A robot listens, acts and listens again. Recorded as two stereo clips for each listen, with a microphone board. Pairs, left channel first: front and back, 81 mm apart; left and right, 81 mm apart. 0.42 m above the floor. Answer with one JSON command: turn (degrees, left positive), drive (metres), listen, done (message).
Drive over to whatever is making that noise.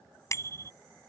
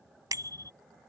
{"turn": -50}
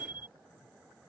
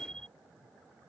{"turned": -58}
{"turn": 10}
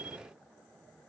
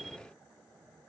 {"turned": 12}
{"drive": 1.0}
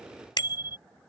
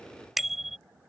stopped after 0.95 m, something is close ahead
{"done": "I am next to the bicycle bell."}